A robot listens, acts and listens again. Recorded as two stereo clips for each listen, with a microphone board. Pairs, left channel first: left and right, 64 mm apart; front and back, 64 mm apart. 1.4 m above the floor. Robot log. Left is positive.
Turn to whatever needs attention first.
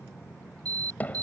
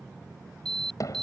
note: The alarm: 85° right.
cmd yaw -85
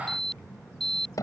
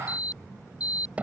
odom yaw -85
end: Facing the alarm.